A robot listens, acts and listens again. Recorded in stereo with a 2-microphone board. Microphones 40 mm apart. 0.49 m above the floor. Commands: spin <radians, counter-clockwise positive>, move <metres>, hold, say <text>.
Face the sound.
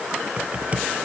spin -0.52
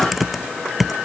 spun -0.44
say Facing the typing on a keyboard.